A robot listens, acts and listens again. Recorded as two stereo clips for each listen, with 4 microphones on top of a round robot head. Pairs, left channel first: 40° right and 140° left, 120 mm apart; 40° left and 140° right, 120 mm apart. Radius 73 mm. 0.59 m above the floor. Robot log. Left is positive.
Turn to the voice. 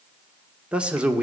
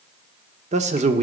note: The man speaking: 140° right.
cmd yaw -140
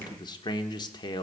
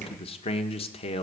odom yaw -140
note: The man speaking is now 10° left.
cmd yaw +10
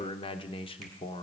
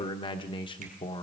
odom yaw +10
end: Facing the man speaking.